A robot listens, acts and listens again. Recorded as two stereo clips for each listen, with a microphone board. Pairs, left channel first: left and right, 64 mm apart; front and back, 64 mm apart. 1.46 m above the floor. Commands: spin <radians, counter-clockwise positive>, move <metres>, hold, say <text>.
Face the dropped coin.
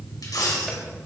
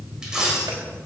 spin 1.75
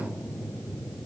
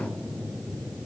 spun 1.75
say Facing where the dropped coin came from. I can't hear it now.